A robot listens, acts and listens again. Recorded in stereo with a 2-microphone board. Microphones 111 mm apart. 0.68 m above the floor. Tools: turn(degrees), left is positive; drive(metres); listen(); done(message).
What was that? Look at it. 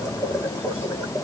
listen()
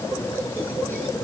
listen()
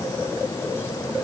done("I can't make out anything to turn to.")